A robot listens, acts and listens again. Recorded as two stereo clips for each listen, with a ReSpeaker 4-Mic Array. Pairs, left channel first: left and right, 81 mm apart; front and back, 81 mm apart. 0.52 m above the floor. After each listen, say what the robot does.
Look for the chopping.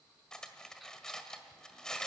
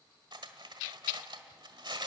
Keep listening.
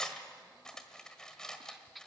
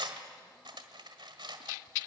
Keep listening.
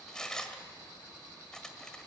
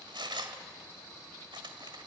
I can't make out chopping to turn to.